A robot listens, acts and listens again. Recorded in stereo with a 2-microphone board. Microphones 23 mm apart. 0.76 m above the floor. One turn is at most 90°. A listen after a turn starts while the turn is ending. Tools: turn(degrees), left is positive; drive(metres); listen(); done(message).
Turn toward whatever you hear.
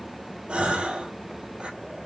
turn(degrees=-55)
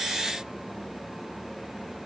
listen()
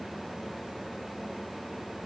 done("I heard a gasp, but can't make it out now. It was about straight ahead or 70° right.")